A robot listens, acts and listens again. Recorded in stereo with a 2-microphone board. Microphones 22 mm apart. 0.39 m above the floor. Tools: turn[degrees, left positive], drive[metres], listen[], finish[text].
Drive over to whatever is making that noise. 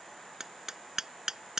Thought: The hammering: about 20° right or 160° right.
Action: turn[-20]
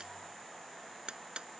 Thought: So it is at 140° right.
Action: turn[-140]
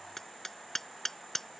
Thought: The hammering is now 10° left.
Action: turn[10]
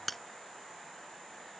Action: drive[1.0]
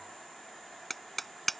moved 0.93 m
Action: drive[1.0]
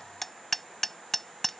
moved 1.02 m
Thought: The hammering is now 10° left.
Action: turn[10]
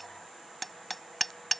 Action: drive[1.0]
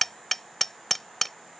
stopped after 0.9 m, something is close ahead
Thought: The hammering is now 10° left.
Action: turn[10]
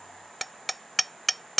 Action: finish[I am next to the hammering.]